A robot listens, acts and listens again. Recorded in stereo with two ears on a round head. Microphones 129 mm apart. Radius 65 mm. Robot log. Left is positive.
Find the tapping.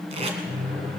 cmd idle
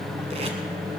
cmd idle
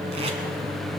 end: I can't make out tapping, only tape being pulled and a microwave.